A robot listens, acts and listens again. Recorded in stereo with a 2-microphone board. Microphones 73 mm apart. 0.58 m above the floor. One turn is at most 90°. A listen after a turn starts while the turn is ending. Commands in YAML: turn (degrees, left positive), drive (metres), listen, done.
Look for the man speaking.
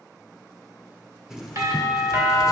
listen: true
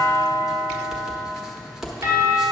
listen: true
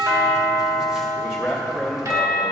turn: 30
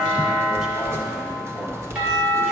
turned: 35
listen: true
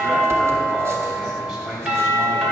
turn: -20
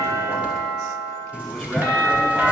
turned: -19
listen: true
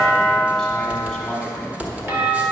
listen: true
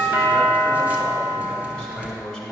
done: "Facing the man speaking, 1 to 2 m away."